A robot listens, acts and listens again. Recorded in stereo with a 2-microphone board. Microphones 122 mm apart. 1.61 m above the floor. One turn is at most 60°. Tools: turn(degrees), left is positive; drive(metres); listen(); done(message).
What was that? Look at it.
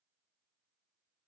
listen()
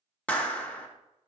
turn(degrees=30)
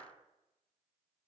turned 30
listen()
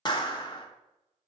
turn(degrees=60)
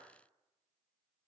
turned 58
turn(degrees=60)
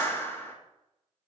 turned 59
turn(degrees=20)
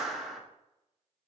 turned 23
done("Found it: a clap, straight ahead, 1 to 2 m away.")